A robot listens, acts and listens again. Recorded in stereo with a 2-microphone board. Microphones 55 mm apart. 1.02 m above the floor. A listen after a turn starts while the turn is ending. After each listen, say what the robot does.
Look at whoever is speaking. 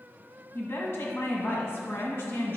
Turn 55° left.
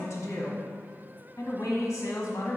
Turn 70° left.
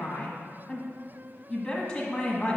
Facing the woman speaking.